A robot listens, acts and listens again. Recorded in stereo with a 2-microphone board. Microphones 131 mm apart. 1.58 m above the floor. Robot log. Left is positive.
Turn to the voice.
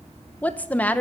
cmd yaw +30
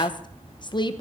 note: So it is at 140° left.
cmd yaw +140
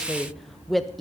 end: Facing the woman speaking.